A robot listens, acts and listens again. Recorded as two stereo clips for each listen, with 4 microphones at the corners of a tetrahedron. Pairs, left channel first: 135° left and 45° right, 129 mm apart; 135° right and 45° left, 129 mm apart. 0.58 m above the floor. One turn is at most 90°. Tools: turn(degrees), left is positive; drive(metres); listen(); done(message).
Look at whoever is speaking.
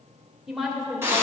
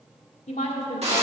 turn(degrees=-90)
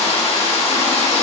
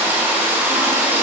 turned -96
turn(degrees=-35)
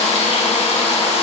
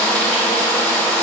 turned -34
listen()
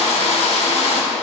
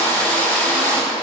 done("I heard a woman speaking from this way, but can't make it out now.")